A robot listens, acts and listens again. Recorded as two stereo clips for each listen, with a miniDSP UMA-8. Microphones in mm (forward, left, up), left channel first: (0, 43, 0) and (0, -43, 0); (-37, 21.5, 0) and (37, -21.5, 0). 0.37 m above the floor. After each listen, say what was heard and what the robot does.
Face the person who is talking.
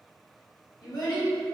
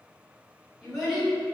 The child speaking: 60° left. Turn 60° left.
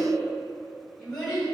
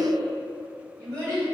Facing the child speaking, 1 to 2 m away.